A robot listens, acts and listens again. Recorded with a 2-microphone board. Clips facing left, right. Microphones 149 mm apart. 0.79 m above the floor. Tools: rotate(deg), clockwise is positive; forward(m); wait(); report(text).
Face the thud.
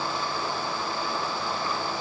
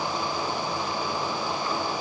wait()
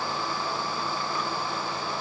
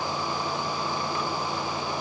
wait()
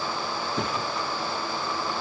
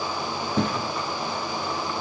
rotate(60)
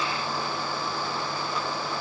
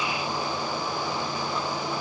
wait()
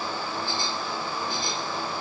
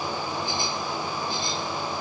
report("I heard a thud, but can't make it out now. It was about straight ahead or 60° right.")